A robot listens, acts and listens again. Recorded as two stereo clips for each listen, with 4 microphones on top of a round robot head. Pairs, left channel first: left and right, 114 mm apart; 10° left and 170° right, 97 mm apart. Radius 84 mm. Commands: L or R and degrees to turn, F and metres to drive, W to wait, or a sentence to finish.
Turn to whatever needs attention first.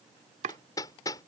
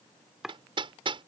W
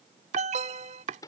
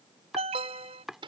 R130
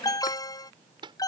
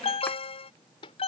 L35
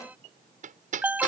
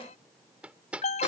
R15
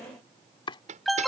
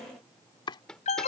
Found it: an alarm, straight ahead.